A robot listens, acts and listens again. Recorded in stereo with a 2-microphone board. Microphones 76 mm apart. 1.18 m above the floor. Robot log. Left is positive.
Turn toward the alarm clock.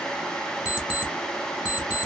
note: The alarm clock: about 15° right or 165° right.
cmd yaw -15
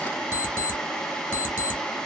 note: So it is at 150° right.
cmd yaw -150
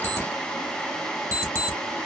note: The alarm clock is now 35° right.
cmd yaw -35
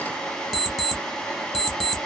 end: Found it: an alarm clock, straight ahead, 1 to 2 m away.